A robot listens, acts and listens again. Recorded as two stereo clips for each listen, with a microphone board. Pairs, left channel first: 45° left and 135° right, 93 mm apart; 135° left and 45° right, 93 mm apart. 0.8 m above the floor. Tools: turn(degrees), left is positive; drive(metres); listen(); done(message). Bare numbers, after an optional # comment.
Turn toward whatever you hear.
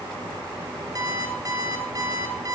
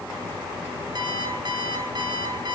# The alarm clock: 85° right.
turn(-85)
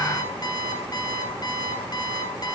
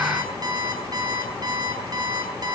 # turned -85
done("Found it: an alarm clock, straight ahead.")